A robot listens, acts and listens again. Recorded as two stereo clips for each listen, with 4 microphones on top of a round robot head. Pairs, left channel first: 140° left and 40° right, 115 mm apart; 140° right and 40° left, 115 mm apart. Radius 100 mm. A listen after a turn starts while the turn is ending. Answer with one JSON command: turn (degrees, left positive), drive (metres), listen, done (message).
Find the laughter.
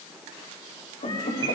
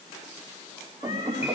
{"turn": 115}
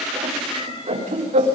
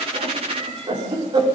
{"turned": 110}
{"turn": -10}
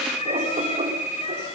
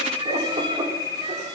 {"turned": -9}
{"done": "Found it: laughter, straight ahead, over 4 m away."}